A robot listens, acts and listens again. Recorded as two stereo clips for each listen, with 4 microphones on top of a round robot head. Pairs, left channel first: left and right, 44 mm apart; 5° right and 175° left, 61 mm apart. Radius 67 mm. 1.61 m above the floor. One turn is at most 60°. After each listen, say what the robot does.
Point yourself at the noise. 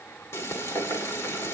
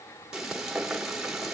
Turn 60° left.
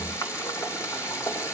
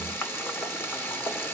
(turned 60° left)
Turn 55° left.
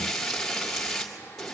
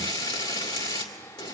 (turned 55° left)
Facing the frying, 2 to 4 m away.